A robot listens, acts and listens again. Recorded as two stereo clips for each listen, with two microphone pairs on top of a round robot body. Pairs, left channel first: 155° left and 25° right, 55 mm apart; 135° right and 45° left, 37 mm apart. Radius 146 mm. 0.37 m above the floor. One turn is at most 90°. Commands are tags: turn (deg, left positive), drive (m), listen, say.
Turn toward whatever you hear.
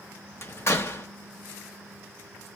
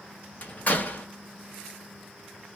<turn deg="-90"/>
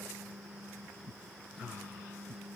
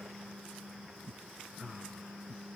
<turn deg="-85"/>
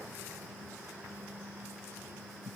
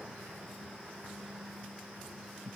<say>Facing where the door slam came from. I can't hear it now.</say>